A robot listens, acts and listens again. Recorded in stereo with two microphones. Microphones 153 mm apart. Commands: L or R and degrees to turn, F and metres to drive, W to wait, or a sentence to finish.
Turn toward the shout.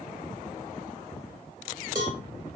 W
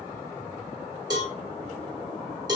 W
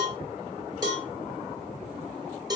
I can't make out a shout, only a cowbell.